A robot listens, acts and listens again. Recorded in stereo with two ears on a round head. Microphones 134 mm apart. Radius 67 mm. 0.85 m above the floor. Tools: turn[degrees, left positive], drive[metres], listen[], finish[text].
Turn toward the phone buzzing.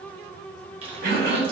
Action: listen[]
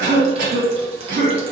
Action: listen[]
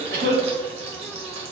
Action: finish[I can't make out a phone buzzing to turn to.]